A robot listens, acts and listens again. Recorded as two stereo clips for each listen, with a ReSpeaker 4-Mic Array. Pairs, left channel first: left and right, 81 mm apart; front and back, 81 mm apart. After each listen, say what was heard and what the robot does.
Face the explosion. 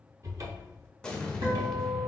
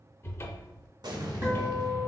The explosion: 170° left. Turn 170° left.
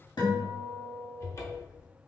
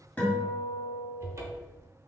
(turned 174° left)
Facing where the explosion came from. I can't hear it now.